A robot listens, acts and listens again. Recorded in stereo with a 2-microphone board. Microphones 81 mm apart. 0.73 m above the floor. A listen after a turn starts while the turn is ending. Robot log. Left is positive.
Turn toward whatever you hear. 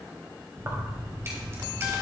note: The keys jangling: about 30° right or 150° right.
cmd yaw -30
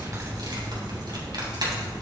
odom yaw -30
note: So it is at 125° right.
cmd yaw -125
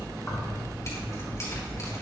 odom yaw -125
note: The keys jangling is now 35° left.
cmd yaw +35
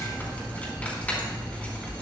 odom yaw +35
note: The keys jangling is now 15° left.
cmd yaw +15
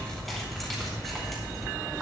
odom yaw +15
end: Facing the keys jangling.